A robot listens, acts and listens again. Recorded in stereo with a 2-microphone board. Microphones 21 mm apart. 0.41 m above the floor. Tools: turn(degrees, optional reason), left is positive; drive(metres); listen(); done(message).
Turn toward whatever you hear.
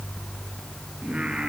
turn(degrees=-55, reason="The singing: about 55° right or 125° right.")
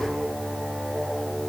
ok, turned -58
listen()
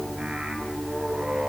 turn(degrees=-65, reason="So it is at 65° right.")
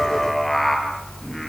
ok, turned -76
turn(degrees=10, reason="The singing is now 10° left.")
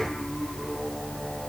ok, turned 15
listen()
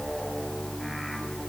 listen()
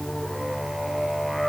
done("Found it: singing, straight ahead.")